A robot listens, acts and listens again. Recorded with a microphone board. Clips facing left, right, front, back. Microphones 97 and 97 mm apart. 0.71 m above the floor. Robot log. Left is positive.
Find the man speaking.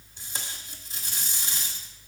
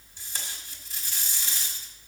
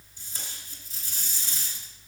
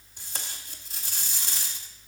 cmd idle
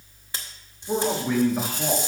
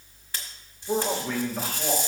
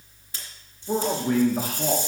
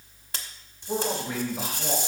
note: The man speaking: 20° left.
cmd yaw +20
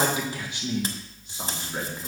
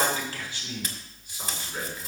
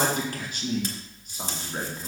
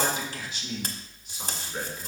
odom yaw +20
note: The man speaking is now 40° left.
cmd yaw +40
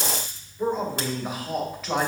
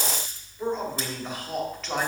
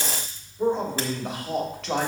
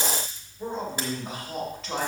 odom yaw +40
note: The man speaking is now 10° left.
cmd yaw +10
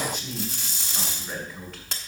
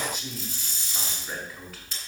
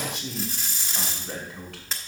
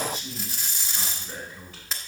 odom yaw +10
end: Facing the man speaking, 2 to 4 m away.